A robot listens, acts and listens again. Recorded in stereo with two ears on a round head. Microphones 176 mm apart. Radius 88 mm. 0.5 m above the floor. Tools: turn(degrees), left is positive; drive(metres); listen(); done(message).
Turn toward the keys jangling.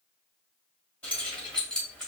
turn(degrees=30)
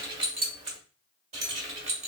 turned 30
turn(degrees=-35)
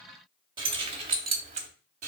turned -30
turn(degrees=-40)
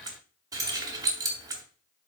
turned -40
turn(degrees=-20)
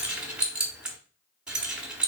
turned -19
done("Found it: keys jangling, straight ahead.")